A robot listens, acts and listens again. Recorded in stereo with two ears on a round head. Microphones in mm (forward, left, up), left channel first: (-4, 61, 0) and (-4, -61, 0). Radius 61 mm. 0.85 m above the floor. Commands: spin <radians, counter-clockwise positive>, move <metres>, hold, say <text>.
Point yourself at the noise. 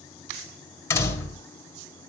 spin 0.35
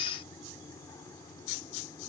hold
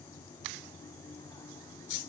say I heard a door slam, but can't make it out now. It was about straight ahead or 140° left.